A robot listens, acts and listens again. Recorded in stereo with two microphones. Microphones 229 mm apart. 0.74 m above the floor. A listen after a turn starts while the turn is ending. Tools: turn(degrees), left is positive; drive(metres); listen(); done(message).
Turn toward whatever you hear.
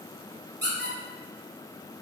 turn(degrees=-50)
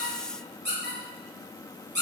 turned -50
turn(degrees=-65)
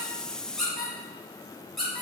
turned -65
done("Facing the squeak, under 1 m away.")